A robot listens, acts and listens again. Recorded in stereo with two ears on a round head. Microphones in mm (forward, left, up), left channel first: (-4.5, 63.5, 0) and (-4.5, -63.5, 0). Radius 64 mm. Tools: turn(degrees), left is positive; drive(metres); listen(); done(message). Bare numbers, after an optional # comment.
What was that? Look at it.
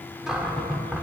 turn(-30)
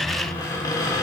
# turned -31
# So it is at 25° left.
turn(25)
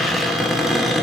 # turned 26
done("Facing the cupboard door.")